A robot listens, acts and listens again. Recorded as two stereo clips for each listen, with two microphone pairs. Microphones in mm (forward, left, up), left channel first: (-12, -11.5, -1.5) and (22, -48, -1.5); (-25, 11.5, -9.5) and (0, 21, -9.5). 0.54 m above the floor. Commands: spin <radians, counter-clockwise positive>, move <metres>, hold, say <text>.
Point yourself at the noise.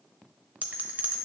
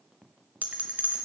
spin 0.17
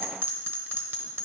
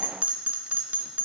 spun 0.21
say Found it: a bell, straight ahead, 1 to 2 m away.